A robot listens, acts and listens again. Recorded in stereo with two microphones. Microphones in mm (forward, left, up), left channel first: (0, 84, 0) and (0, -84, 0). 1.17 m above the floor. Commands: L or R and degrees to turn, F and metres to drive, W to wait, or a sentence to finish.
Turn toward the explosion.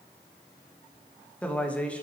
W
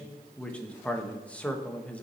W
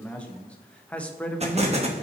R40
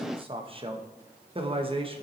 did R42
W
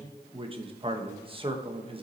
I heard an explosion, but can't make it out now. It was about straight ahead or 100° right.